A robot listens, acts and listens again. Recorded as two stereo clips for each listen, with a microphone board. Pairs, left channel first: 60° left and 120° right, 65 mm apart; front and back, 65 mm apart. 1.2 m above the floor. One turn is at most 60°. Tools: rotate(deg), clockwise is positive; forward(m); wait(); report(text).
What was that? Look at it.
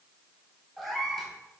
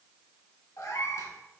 rotate(30)
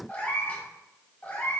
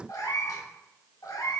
report("Found it: a cat meowing, straight ahead, under 1 m away.")